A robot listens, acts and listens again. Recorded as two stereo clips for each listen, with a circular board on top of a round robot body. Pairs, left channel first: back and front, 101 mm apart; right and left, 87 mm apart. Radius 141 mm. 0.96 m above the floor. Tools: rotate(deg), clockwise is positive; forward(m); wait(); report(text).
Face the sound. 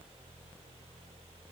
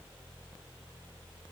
wait()
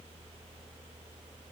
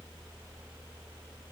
wait()
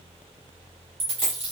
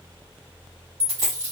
rotate(-30)
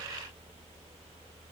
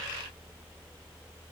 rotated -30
report("I heard a dropped coin from this way, but can't make it out now.")